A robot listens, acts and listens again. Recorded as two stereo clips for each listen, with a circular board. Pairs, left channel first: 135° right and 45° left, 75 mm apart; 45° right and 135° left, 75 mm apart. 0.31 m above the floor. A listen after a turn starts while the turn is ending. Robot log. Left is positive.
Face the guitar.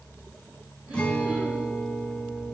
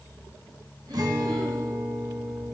note: The guitar: 150° left.
cmd yaw +150
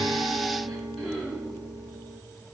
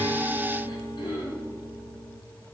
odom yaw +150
note: The guitar is now 15° right.
cmd yaw -15
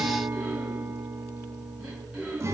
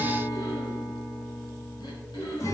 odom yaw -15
end: Found it: a guitar, straight ahead, 1 to 2 m away.